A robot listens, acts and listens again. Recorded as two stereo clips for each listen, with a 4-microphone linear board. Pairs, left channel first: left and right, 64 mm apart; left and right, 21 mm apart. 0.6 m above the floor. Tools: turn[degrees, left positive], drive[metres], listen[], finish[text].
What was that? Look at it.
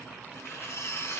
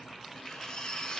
Thought: The cutlery clinking: about 45° left or 135° left.
Action: turn[45]
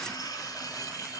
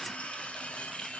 Thought: So it is at 90° left.
Action: turn[90]
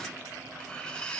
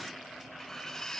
Thought: The cutlery clinking is now 15° left.
Action: turn[15]
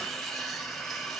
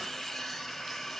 Action: finish[Found it: cutlery clinking, straight ahead.]